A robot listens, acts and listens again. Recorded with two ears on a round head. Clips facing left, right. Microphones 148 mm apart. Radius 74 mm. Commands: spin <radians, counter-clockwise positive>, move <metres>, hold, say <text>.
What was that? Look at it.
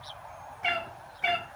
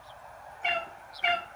spin 0.52
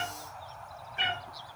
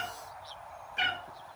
spin -0.79
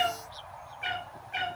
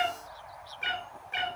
spin -0.79
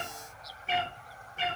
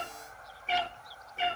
say Facing the cat meowing.